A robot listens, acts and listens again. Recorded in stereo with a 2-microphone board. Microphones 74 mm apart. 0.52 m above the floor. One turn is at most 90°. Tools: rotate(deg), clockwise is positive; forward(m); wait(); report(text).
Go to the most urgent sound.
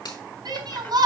rotate(65)
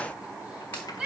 rotate(10)
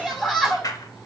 forward(1.0)
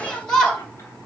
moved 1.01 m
rotate(-10)
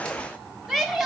forward(1.0)
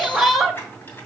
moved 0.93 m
forward(1.0)
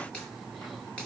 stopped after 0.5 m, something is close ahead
wait()
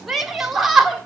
report("I am next to the shout.")